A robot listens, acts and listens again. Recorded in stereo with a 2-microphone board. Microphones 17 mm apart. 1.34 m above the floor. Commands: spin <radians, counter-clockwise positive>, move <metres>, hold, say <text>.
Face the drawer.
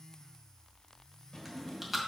spin 0.87
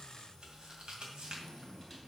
hold
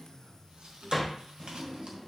say Found it: a drawer, straight ahead.